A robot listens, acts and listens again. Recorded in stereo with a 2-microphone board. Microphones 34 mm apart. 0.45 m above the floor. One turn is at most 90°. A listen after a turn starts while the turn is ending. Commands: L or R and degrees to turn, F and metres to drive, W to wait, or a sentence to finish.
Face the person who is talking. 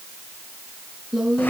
R30
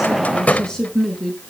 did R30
L20
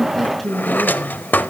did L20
Facing the woman speaking.